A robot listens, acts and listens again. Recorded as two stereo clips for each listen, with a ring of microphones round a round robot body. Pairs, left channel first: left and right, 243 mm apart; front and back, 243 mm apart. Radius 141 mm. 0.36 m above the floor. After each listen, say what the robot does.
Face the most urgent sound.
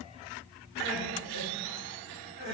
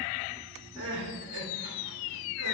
Turn 145° right.
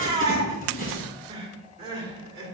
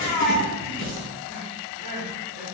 Turn 15° right.
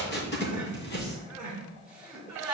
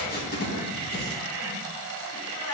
Found it: crying, straight ahead.